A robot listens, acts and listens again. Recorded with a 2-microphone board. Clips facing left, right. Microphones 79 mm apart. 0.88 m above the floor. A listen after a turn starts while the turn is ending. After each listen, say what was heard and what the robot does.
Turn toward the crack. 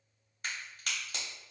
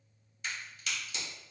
The crack: about 55° left or 125° left. Turn 55° left.
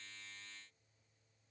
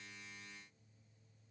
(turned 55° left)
Keep listening.
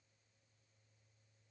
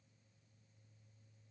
I heard a crack, but can't make it out now. It was about straight ahead or 70° left.